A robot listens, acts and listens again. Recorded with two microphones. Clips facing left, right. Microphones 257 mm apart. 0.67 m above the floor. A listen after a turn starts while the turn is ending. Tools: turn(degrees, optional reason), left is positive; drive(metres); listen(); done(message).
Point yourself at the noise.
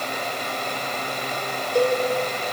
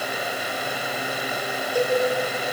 turn(degrees=25, reason="The cowbell: about 25° left or 155° left.")
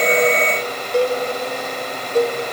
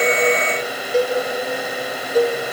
done("Facing the cowbell.")